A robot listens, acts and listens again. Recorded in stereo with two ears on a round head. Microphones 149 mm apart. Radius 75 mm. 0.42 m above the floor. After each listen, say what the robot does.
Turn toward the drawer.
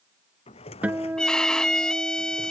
Turn 40° left.
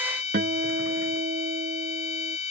Keep listening.
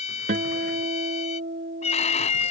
Keep listening.
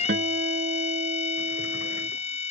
I heard a drawer, but can't make it out now. It was about straight ahead or 100° left.